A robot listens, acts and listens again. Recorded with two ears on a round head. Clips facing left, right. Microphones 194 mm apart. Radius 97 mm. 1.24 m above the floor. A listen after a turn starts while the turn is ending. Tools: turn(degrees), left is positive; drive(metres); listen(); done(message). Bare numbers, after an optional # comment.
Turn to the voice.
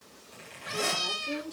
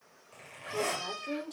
turn(30)
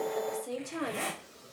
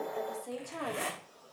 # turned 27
# So it is at 155° left.
turn(155)
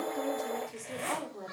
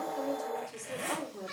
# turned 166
# The woman speaking is now 10° right.
turn(-10)
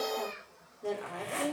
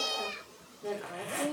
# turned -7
done("Facing the woman speaking, over 4 m away.")